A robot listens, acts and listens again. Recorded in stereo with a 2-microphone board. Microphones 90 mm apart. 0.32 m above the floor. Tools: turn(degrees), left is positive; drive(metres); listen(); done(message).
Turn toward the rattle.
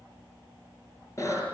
listen()
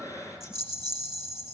turn(degrees=-45)
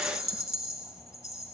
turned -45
done("Found it: a rattle, straight ahead, 2 to 4 m away.")